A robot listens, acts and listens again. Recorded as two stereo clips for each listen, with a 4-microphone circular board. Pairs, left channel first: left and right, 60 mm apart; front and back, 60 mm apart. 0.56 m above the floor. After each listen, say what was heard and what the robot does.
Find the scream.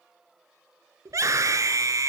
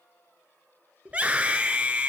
The scream: 120° right. Turn 120° right.
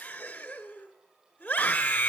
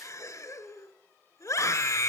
The scream is now 25° left. Turn 25° left.
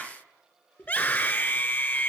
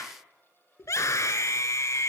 The scream is now 25° left. Turn 25° left.
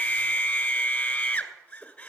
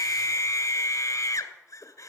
The scream is now 20° left. Turn 20° left.
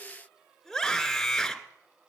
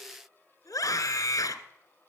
Found it: a scream, straight ahead, 1 to 2 m away.